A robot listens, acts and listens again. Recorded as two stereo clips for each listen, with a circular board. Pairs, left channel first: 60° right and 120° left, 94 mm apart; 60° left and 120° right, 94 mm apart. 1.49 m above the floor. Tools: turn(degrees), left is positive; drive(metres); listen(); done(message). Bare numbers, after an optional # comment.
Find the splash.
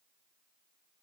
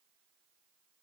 listen()
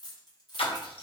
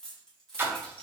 # The splash: 55° right.
turn(-55)
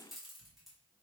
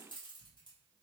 done("Facing where the splash came from. I can't hear it now.")